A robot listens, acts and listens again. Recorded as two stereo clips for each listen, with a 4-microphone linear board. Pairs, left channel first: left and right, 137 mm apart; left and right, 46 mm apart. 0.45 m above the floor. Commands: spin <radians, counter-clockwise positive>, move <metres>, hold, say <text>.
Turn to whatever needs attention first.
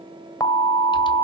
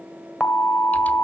spin 0.52
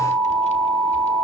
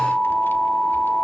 say Found it: an alarm, straight ahead.